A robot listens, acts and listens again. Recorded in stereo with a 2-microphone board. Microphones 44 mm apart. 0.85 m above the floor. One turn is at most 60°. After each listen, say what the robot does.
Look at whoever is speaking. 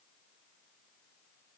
Keep listening.
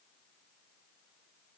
Keep listening.
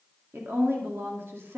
Turn 60° right.
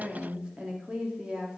Turn 25° right.
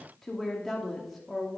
Found it: a woman speaking, straight ahead, 2 to 4 m away.